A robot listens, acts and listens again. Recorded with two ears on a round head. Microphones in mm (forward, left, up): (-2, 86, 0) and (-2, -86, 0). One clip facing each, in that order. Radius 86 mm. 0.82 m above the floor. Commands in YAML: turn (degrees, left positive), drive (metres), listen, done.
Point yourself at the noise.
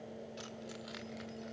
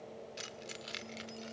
turn: -45
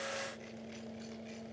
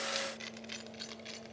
turn: -100
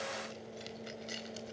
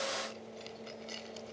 turn: 20
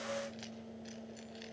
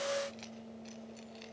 listen: true
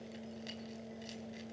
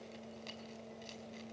listen: true
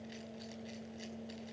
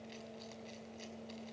done: "Facing where the keys jangling came from. I can't hear it now."